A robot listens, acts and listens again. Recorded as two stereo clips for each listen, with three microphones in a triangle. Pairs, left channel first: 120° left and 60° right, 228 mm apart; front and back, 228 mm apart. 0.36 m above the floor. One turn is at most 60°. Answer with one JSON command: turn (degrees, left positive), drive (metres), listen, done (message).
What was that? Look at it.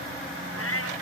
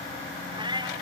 {"turn": 60}
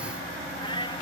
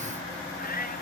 {"turn": 50}
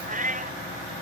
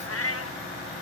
{"done": "Facing the cat meowing."}